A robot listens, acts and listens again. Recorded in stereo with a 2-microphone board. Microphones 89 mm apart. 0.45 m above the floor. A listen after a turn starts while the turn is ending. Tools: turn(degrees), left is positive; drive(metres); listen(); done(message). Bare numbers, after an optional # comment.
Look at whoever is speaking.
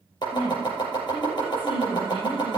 # The woman speaking: about 70° left or 110° left.
turn(70)
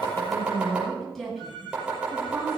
done("Found it: a woman speaking, straight ahead.")